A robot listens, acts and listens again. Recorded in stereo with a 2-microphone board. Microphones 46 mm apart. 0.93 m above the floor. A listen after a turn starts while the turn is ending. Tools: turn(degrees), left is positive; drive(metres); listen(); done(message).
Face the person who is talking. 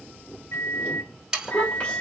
turn(degrees=40)
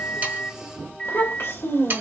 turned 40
turn(degrees=100)
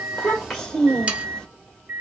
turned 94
turn(degrees=10)
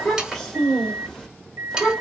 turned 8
done("Facing the child speaking.")